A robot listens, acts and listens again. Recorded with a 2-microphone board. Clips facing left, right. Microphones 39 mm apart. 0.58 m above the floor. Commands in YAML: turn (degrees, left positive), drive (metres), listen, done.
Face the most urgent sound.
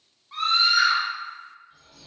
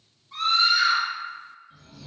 turn: 30
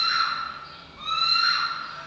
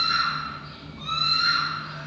turn: 115
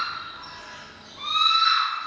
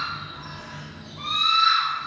done: "Found it: a scream, straight ahead."